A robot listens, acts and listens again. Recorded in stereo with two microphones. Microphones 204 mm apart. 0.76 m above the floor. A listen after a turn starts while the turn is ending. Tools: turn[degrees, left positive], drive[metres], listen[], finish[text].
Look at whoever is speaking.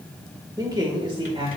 Thought: The man speaking: about 25° right or 155° right.
Action: turn[-25]
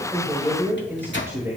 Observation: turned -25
Action: turn[-30]
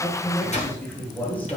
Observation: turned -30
Thought: So it is at 10° left.
Action: turn[10]
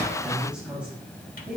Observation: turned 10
Action: finish[Facing the man speaking.]